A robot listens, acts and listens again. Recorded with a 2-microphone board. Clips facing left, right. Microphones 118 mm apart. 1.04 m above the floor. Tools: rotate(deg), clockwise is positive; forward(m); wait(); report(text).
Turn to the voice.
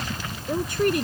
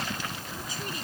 rotate(-65)
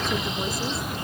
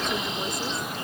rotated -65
wait()
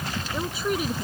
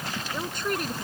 report("Facing the woman speaking.")